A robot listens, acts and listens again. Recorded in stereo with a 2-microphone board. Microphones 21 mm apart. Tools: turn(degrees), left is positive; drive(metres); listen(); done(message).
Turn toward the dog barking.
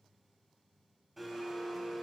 listen()
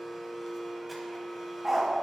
turn(degrees=-30)
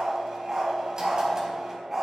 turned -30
turn(degrees=-20)
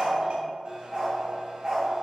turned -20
turn(degrees=-150)
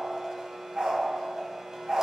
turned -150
turn(degrees=-45)
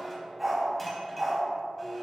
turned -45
turn(degrees=-10)
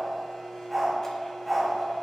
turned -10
done("Found it: a dog barking, straight ahead.")